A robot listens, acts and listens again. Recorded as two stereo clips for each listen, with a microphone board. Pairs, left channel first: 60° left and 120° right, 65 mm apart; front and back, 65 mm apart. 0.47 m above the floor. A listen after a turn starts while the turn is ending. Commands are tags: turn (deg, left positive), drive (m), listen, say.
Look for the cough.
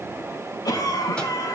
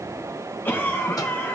<turn deg="60"/>
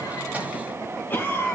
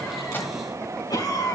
<say>Found it: a cough, straight ahead, over 4 m away.</say>